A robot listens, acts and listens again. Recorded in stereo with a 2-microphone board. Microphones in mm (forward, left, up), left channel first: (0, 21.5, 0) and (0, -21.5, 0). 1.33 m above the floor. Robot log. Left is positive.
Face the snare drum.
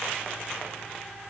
cmd idle
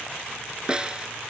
note: The snare drum: about 20° right or 160° right.
cmd yaw -20
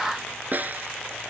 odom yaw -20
note: So it is at 135° right.
cmd yaw -135
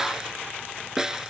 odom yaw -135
note: The snare drum is now 10° right.
cmd yaw -10
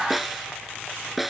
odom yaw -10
end: Facing the snare drum.